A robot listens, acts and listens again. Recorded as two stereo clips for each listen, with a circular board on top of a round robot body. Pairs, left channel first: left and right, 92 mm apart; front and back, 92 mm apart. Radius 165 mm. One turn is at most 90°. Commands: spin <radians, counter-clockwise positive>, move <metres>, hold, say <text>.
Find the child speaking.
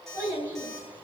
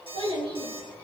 spin -1.57
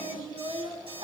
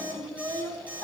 spin -1.22
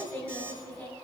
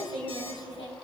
spin 0.26
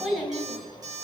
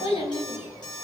say Facing the child speaking, over 4 m away.